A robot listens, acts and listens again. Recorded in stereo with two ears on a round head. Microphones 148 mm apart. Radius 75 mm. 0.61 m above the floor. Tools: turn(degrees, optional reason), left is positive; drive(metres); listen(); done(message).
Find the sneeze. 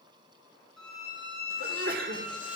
turn(degrees=-60, reason="The sneeze: about 60° right or 120° right.")
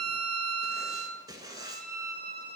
listen()
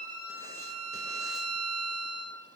done("I heard a sneeze, but can't make it out now. It was about straight ahead or 60° right.")